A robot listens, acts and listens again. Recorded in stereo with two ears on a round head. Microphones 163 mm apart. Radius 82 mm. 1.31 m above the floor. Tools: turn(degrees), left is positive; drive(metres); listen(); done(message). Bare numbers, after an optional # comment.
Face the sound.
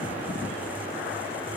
listen()
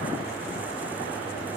listen()
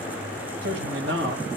turn(-90)
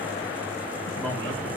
listen()
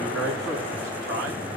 done("Facing the man speaking, 2 to 4 m away.")